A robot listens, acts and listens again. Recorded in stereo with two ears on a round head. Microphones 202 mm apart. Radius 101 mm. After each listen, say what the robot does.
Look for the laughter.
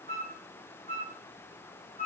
Keep listening.
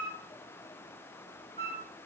Keep listening.
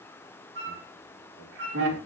Turn 90° right.
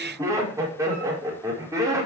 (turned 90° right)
Turn 15° right.
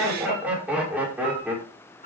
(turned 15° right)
Facing the laughter.